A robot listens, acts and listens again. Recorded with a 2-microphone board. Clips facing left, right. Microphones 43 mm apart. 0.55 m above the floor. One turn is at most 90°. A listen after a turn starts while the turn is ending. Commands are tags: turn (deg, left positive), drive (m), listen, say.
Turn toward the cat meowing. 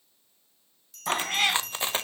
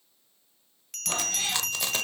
<turn deg="65"/>
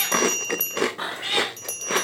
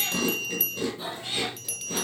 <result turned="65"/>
<turn deg="65"/>
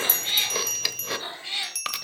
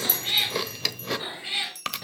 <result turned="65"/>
<turn deg="-10"/>
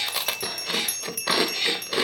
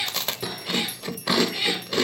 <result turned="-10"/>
<say>Facing the cat meowing.</say>